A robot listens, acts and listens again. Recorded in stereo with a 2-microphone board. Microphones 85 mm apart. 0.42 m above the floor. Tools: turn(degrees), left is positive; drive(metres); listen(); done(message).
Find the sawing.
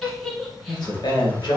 listen()
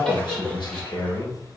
listen()
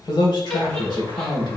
done("I can't make out sawing to turn to.")